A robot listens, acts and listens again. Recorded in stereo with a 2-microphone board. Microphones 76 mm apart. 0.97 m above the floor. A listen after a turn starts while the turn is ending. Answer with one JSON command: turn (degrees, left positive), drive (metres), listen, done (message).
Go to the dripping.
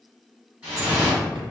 {"turn": -25}
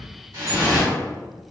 {"turn": -130}
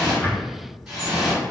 {"drive": 1.0}
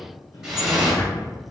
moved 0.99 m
{"drive": 1.0}
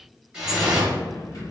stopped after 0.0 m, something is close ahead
{"turn": -10}
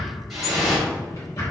{"done": "Arrived at the dripping, straight ahead."}